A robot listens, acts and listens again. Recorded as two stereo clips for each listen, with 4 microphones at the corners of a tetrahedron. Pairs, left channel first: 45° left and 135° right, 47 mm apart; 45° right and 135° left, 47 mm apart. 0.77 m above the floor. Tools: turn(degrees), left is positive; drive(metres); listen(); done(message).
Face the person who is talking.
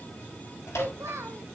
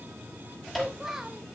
turn(degrees=-145)
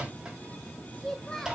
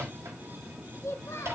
turn(degrees=-30)
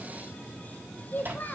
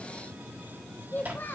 done("Facing the child speaking, 1 to 2 m away.")